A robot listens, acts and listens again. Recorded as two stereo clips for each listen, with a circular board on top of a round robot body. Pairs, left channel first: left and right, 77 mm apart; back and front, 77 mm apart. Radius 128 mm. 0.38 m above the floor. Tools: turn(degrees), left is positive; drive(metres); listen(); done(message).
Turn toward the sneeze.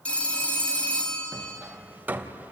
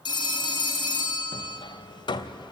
listen()
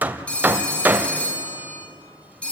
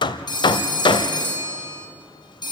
listen()
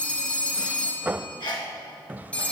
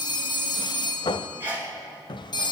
turn(degrees=65)
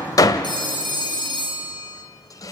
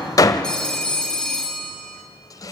done("Facing where the sneeze came from. I can't hear it now.")